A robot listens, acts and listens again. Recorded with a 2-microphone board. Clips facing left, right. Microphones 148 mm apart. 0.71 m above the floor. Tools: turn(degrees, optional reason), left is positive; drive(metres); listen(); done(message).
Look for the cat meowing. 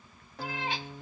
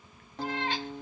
turn(degrees=30)
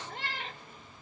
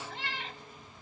turn(degrees=125, reason="So it is at 125° left.")
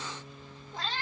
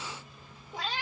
turn(degrees=-15, reason="The cat meowing is now 15° right.")
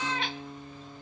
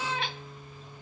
done("Found it: a cat meowing, straight ahead.")